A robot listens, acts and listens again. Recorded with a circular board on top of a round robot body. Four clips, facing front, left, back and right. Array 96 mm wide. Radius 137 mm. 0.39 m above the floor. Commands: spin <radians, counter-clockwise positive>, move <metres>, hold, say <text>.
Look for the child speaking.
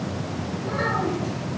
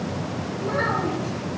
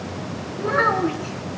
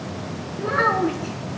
spin -2.44
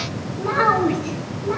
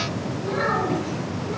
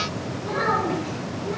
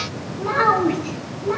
spin -0.96
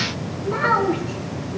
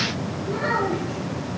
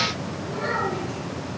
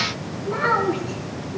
spin -0.61
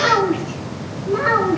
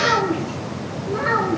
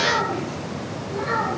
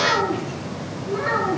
spin 0.26
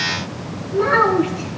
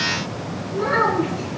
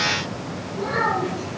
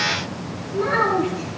say Found it: a child speaking, straight ahead, 2 to 4 m away.